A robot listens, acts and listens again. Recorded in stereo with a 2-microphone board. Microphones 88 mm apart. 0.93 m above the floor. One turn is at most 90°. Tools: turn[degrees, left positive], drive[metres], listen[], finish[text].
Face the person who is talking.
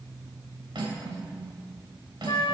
Action: listen[]
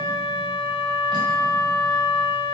Action: listen[]
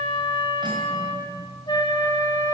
Action: finish[I can't make out anyone speaking to turn to.]